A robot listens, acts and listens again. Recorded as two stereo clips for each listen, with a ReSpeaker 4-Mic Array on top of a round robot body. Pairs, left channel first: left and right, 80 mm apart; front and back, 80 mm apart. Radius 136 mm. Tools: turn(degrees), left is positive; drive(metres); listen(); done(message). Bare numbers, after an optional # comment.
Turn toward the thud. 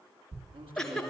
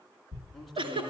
# The thud: 135° right.
turn(-135)
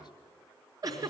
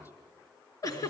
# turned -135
done("I heard a thud from this way, but can't make it out now.")